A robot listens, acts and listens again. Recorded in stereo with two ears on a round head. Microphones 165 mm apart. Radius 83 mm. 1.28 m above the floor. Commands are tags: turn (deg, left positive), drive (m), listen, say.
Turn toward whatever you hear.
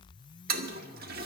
<turn deg="-55"/>
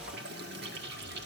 <turn deg="-65"/>
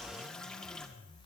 <say>Facing the toilet flushing, 1 to 2 m away.</say>